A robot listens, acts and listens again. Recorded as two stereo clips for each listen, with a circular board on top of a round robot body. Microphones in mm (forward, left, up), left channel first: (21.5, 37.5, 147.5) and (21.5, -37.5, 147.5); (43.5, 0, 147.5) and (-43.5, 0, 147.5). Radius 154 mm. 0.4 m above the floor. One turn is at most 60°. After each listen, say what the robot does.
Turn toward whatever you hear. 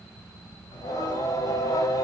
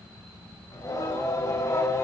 Turn 50° left.
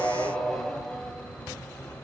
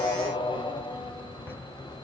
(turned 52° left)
Turn 15° left.
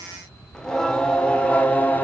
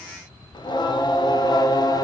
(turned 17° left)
Turn 25° left.
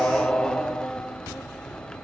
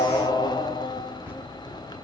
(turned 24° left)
Turn 15° left.
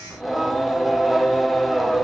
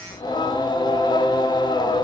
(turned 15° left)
Found it: singing, straight ahead, 1 to 2 m away.